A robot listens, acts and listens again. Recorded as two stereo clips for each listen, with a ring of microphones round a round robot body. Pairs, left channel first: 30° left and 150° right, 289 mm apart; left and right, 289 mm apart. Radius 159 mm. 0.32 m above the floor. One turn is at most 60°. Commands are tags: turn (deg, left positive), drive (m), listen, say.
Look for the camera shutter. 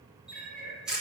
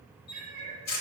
<turn deg="60"/>
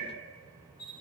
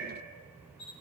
<turn deg="60"/>
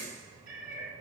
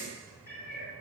<listen/>
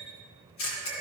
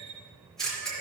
<say>Found it: a camera shutter, straight ahead.</say>